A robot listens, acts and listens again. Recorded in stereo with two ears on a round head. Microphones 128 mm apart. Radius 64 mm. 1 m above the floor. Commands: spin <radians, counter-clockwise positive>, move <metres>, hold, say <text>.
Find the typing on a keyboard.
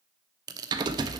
spin -0.52
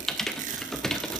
say Found it: typing on a keyboard, straight ahead.